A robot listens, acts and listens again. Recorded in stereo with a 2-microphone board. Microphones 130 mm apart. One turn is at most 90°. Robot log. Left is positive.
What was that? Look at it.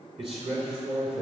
note: The man speaking: about 50° right or 130° right.
cmd yaw -50
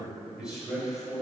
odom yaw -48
end: Found it: a man speaking, straight ahead.